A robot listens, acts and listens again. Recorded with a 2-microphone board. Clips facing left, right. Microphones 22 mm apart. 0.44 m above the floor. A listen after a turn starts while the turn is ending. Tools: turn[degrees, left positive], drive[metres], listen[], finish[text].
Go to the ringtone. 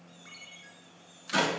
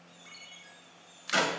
Action: turn[-30]
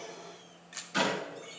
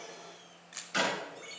Action: listen[]
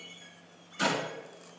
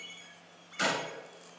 Thought: So it is at 145° right.
Action: turn[-145]
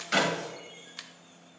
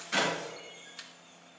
Action: listen[]
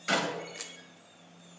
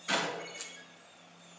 Action: listen[]
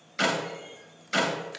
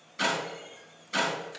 Action: finish[Facing where the ringtone came from. I can't hear it now. I did not reach it.]